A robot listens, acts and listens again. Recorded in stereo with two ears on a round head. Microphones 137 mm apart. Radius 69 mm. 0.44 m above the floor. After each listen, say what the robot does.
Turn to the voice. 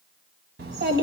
Turn 75° right.
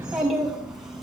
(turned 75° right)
Found it: a child speaking, straight ahead.